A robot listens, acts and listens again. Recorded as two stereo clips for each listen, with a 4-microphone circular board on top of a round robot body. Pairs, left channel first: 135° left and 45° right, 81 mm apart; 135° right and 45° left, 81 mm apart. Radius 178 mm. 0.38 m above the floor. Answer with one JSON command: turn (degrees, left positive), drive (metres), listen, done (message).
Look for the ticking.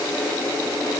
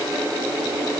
{"listen": true}
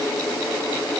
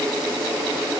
{"listen": true}
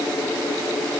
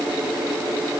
{"done": "I can't make out ticking."}